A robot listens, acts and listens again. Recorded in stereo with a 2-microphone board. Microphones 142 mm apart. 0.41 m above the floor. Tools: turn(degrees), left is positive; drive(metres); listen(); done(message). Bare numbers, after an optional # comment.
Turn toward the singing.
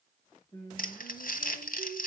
# The singing: about 35° left or 145° left.
turn(35)
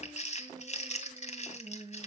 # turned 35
done("Facing the singing.")